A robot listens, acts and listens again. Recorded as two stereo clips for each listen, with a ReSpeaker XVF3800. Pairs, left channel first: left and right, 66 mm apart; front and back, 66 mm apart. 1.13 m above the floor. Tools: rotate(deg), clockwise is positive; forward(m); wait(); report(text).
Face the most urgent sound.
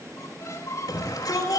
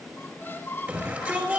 rotate(-120)
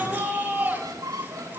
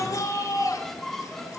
rotate(20)
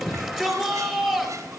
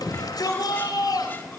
rotate(-10)
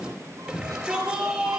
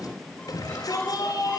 report("Facing the shout, 2 to 4 m away.")